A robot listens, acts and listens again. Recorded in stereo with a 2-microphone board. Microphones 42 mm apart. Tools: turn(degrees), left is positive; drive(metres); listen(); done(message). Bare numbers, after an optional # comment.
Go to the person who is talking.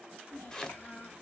# The child speaking: about 50° left or 130° left.
turn(50)
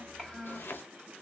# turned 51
drive(1.0)
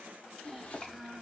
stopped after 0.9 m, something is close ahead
done("Arrived at the child speaking, straight ahead.")